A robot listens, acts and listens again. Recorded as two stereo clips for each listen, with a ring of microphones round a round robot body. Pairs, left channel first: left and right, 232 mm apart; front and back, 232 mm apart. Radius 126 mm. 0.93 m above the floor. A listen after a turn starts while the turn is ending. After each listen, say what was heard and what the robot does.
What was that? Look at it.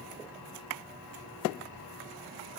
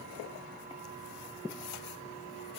Keep listening.
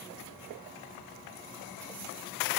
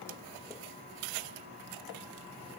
Keep listening.
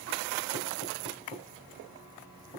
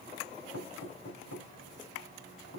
The knocking: 25° left. Turn 25° left.
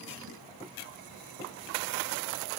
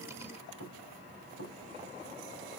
Facing the knocking.